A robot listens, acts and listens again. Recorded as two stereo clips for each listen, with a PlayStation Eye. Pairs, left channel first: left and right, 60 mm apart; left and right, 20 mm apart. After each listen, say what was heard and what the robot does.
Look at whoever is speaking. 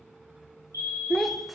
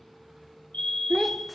Turn 30° left.
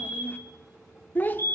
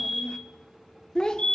So it is at 145° left. Turn 145° left.
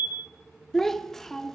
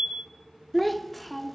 Found it: a child speaking, straight ahead.